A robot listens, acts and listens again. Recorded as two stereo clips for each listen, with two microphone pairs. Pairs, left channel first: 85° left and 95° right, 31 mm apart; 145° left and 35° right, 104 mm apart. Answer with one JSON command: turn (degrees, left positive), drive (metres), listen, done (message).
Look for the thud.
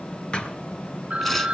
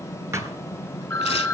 {"turn": 30}
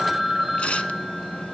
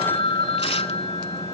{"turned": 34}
{"done": "I heard a thud from this way, but can't make it out now."}